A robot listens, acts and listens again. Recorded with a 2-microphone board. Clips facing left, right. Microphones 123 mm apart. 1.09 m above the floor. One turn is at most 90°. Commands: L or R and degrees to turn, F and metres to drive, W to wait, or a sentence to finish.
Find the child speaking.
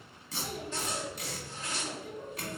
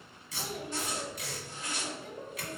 R90
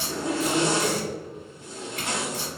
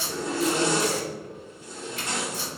W
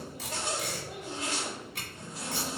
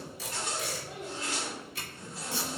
L10
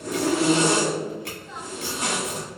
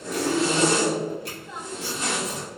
W
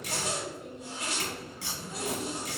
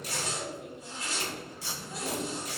Facing the child speaking, 1 to 2 m away.